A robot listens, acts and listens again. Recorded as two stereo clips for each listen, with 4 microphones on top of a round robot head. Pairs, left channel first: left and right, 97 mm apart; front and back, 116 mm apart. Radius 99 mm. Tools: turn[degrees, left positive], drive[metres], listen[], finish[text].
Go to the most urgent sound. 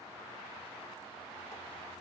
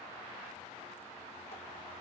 Action: listen[]
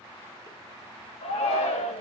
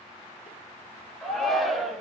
Thought: The shout: 90° left.
Action: turn[90]
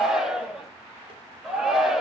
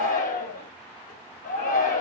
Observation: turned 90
Action: drive[1.0]
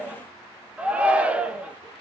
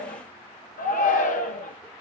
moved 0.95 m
Thought: The shout is now 10° right.
Action: turn[-10]
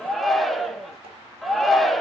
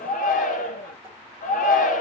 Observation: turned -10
Action: drive[1.0]
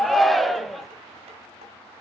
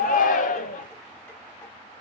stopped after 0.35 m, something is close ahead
Action: finish[Arrived at the shout, straight ahead.]